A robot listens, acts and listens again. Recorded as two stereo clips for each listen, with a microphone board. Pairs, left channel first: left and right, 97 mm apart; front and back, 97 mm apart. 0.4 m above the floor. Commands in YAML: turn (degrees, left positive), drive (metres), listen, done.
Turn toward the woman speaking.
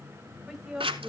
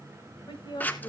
done: "Found it: a woman speaking, straight ahead, 1 to 2 m away."